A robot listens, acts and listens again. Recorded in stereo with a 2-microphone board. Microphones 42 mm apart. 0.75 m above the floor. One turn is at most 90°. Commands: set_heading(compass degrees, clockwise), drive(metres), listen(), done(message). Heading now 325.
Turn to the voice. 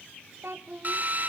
set_heading(35)
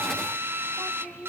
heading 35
set_heading(65)
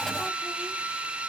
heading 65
listen()
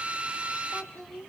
done("Facing the child speaking, 1 to 2 m away.")